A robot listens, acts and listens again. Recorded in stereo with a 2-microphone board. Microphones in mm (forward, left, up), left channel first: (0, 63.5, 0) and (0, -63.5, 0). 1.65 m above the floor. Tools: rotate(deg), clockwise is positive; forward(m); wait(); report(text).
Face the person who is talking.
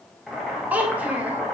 rotate(30)
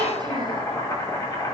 wait()
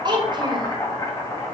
rotate(140)
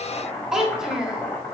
report("Found it: a child speaking, straight ahead.")